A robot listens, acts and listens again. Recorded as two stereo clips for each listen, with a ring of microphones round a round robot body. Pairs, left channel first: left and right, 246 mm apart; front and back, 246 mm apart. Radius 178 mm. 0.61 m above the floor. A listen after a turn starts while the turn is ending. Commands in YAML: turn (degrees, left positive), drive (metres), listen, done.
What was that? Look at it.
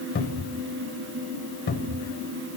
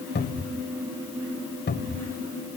turn: 50
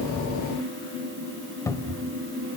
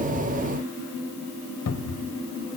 turn: 10
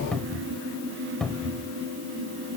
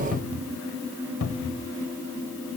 done: "Found it: a cupboard door, straight ahead, 1 to 2 m away."